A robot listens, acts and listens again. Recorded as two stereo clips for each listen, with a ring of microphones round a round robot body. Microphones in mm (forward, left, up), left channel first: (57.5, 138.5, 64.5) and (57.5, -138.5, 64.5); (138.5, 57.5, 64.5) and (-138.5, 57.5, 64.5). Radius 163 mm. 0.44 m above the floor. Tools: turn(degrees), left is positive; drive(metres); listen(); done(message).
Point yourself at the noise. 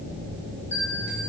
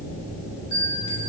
turn(degrees=10)
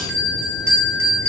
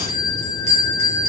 done("Found it: a bell, straight ahead, 1 to 2 m away.")